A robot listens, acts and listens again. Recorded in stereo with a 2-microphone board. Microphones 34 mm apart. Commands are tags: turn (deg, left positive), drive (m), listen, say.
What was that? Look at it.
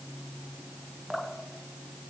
<turn deg="30"/>
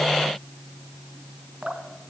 <turn deg="-30"/>
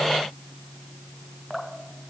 <say>Facing the dripping.</say>